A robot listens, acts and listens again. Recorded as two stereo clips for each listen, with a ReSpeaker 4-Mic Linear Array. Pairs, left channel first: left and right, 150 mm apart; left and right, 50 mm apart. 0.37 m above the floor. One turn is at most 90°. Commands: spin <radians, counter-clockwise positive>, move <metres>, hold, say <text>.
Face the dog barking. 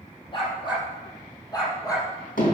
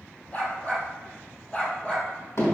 spin 0.44
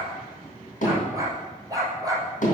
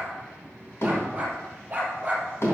spin -0.44
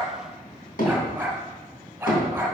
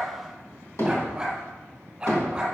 spin -0.17
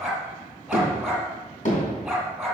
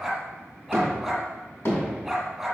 say Found it: a dog barking, straight ahead.